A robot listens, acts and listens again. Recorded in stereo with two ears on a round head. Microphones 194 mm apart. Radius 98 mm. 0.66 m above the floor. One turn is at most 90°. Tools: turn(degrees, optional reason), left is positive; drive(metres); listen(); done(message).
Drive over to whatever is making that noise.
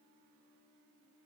listen()
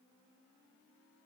listen()
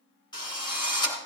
turn(degrees=20, reason="The drill: about 20° left or 160° left.")
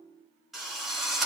drive(metres=1.0)
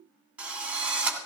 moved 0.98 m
drive(metres=1.0)
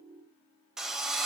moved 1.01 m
drive(metres=1.0)
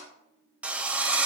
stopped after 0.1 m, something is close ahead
done("Arrived at the drill, straight ahead.")